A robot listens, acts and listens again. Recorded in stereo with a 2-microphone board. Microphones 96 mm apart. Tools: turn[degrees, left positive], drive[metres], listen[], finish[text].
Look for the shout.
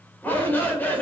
Thought: The shout: about 20° left or 160° left.
Action: turn[20]
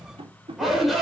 Action: finish[Facing the shout, 2 to 4 m away.]